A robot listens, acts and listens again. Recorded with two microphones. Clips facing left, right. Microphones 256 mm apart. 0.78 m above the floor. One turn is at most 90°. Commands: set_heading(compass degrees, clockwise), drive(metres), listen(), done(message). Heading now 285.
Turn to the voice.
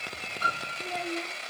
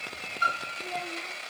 set_heading(325)
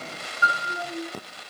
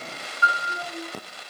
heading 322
set_heading(52)
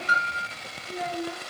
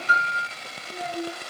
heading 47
set_heading(67)
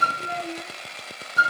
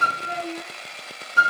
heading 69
done("Facing the child speaking, over 4 m away.")